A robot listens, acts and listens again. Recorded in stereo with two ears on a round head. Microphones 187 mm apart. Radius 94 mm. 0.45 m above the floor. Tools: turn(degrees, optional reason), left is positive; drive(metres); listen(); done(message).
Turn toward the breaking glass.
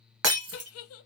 turn(degrees=-90)
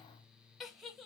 done("I heard breaking glass from this way, but can't make it out now.")